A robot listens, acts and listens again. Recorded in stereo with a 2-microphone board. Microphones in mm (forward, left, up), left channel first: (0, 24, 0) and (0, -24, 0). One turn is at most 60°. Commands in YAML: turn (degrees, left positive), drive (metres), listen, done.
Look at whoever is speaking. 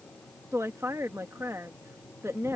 turn: -60
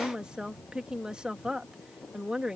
turn: -15
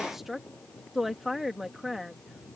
done: "Facing the woman speaking."